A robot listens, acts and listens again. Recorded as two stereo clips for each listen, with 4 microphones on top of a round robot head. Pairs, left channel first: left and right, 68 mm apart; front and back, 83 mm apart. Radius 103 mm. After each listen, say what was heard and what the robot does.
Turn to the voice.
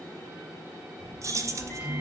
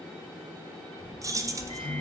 The child speaking: 15° right. Turn 15° right.
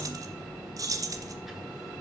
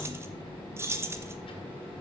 Found it: a child speaking, straight ahead.